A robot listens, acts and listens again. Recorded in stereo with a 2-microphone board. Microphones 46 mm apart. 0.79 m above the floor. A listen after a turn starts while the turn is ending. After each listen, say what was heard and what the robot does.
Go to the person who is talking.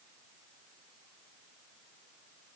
Keep listening.
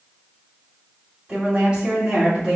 Turn 30° right.
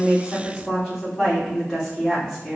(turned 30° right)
So it is at 15° left. Turn 15° left.
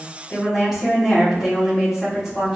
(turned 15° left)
Drive 1.0 m forward.
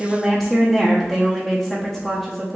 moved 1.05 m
Drive 1.0 m forward.
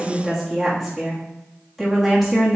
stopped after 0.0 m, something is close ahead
Arrived at the woman speaking, straight ahead.